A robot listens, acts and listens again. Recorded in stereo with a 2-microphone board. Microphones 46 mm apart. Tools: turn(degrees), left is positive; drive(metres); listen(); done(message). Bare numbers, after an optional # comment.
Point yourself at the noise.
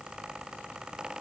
listen()
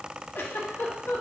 # The giggle: about 75° left or 105° left.
turn(75)
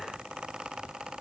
listen()
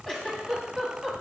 # So it is at 15° left.
turn(15)
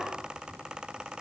listen()
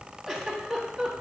done("Facing the giggle, under 1 m away.")